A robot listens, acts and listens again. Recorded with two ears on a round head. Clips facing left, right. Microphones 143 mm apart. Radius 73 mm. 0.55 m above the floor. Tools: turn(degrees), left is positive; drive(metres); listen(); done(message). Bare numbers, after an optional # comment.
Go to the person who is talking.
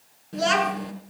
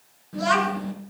# The child speaking: about 30° left or 150° left.
turn(30)
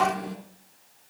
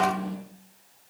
# So it is at 120° left.
turn(120)
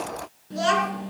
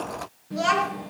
# The child speaking is now 20° left.
turn(20)
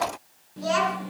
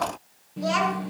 drive(1.0)
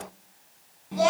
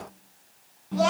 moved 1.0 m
# The child speaking is now 15° left.
turn(15)
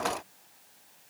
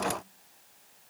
listen()
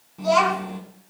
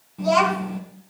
drive(1.0)
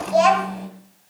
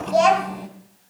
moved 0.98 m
drive(1.0)
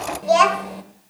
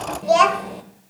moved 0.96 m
drive(1.0)
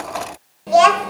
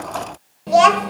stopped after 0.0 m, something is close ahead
done("I am next to the child speaking.")